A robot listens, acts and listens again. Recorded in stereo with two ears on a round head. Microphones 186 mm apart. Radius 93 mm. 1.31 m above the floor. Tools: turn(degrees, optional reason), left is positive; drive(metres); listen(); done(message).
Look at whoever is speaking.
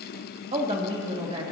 turn(degrees=-25, reason="The woman speaking: about 25° right or 155° right.")
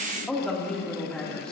done("Facing the woman speaking.")